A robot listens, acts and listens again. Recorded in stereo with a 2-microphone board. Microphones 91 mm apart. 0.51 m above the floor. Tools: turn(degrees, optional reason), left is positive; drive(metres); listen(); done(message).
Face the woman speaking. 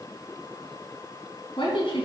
turn(degrees=75, reason="The woman speaking: about 75° left or 105° left.")
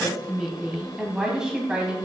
turn(degrees=-15, reason="So it is at 15° right.")
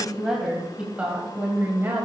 turn(degrees=-30, reason="The woman speaking is now 30° right.")
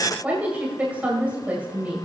turn(degrees=-20, reason="The woman speaking is now 20° right.")
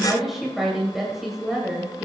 done("Found it: a woman speaking, straight ahead.")